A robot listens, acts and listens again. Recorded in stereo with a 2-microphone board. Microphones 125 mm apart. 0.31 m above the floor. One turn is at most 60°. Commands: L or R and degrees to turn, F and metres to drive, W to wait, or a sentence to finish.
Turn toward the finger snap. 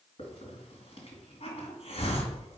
W
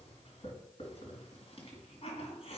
W
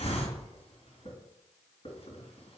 I can't make out a finger snap to turn to.